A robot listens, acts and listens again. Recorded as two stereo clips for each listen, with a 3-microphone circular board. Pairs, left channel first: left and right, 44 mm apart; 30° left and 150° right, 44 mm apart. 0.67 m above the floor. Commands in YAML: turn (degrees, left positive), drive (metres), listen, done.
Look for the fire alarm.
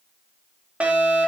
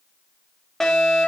turn: -45
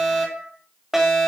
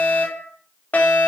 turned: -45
turn: -10
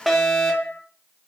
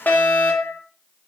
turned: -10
done: "Facing the fire alarm."